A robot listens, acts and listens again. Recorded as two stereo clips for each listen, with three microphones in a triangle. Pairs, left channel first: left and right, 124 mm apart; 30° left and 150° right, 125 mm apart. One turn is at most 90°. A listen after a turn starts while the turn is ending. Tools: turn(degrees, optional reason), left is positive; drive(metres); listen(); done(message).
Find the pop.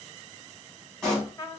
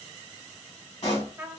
done("Facing the pop, 2 to 4 m away.")